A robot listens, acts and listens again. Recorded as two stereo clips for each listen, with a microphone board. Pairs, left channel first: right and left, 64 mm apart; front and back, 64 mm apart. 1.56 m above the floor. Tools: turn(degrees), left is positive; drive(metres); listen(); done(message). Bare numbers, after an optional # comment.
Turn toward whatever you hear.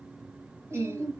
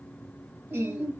# The singing: 135° left.
turn(135)
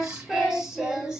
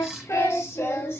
# The singing is now 15° left.
turn(15)
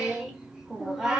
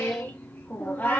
# The singing is now 25° left.
turn(25)
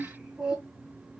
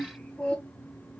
# The singing is now 60° left.
turn(60)
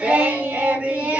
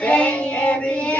# The singing is now 50° left.
turn(50)
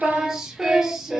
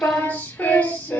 # The singing is now 20° left.
turn(20)
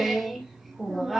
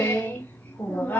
done("Found it: singing, straight ahead, 1 to 2 m away.")